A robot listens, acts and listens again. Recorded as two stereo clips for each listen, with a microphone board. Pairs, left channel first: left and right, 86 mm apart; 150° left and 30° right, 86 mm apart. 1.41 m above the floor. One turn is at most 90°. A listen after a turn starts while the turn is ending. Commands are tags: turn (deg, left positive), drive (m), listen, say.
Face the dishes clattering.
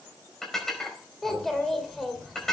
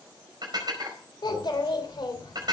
<say>Found it: dishes clattering, straight ahead.</say>